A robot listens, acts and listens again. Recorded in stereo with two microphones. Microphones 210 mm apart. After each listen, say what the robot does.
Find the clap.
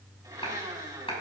Turn 25° left.
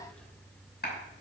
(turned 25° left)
Turn 130° left.
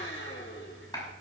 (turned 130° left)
Turn 20° left.
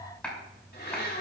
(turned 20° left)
Found it: a clap, straight ahead.